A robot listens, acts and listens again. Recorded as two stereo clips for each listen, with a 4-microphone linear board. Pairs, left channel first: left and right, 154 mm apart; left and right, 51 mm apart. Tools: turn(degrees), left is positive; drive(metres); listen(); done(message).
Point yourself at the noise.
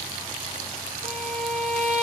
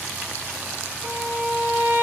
turn(degrees=-50)
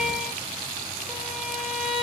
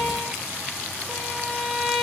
done("Facing the violin, 2 to 4 m away.")